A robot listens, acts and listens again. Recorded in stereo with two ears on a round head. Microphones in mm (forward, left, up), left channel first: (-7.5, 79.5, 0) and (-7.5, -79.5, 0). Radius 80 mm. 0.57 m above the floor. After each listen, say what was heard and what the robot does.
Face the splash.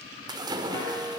The splash: about 25° right or 155° right. Turn 25° right.
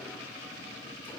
Keep listening.
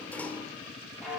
I heard a splash, but can't make it out now. It was about straight ahead or 130° right.